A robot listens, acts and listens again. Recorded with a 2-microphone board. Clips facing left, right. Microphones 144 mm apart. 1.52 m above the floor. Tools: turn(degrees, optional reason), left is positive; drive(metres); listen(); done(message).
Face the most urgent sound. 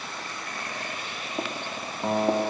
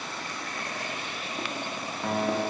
listen()
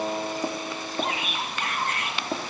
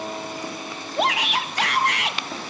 turn(degrees=-90)
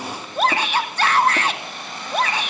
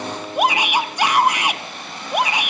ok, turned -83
turn(degrees=-15, reason="So it is at 15° right.")
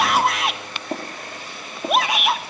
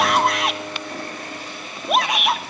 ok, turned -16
done("Facing the shout.")